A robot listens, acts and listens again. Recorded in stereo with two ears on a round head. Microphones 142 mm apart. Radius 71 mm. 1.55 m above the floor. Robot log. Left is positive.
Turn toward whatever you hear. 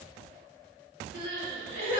note: The crying: about 55° left or 125° left.
cmd yaw +55
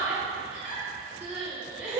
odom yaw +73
note: So it is at 10° right.
cmd yaw -10
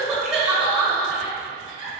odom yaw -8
end: Found it: crying, straight ahead, 1 to 2 m away.